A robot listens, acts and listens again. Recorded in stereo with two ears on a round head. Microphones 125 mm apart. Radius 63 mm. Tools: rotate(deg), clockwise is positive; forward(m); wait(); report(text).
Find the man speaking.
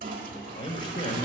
rotate(-40)
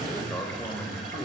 rotate(-10)
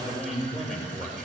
report("Facing the man speaking.")